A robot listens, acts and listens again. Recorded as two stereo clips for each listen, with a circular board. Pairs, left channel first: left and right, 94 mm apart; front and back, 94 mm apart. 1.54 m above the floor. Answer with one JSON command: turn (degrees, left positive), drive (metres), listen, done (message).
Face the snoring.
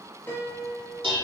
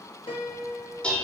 {"listen": true}
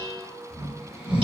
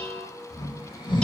{"turn": -15}
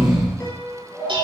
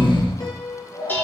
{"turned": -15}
{"done": "Found it: snoring, straight ahead, 2 to 4 m away."}